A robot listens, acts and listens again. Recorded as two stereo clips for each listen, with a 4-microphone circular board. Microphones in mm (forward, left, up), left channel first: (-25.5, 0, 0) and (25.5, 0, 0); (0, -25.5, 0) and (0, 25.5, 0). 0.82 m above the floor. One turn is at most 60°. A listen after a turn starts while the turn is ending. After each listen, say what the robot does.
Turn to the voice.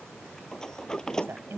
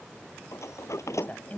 Turn 35° right.
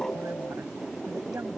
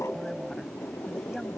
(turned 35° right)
Turn 15° right.
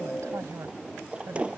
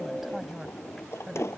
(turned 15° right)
Found it: a woman speaking, straight ahead.